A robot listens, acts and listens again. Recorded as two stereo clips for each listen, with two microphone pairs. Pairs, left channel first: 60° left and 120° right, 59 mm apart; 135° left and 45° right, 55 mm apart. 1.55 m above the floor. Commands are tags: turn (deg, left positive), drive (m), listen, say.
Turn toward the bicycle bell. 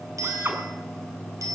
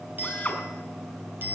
<turn deg="-100"/>
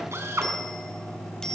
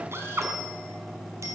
<turn deg="-20"/>
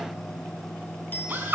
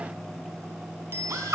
<say>Found it: a bicycle bell, straight ahead, over 4 m away.</say>